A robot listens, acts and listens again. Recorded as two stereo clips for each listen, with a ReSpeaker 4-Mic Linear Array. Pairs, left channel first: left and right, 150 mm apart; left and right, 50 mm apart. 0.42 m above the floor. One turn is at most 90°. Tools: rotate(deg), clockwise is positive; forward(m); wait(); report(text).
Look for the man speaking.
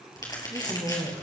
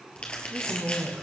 rotate(40)
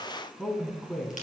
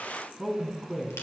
report("Found it: a man speaking, straight ahead, 2 to 4 m away.")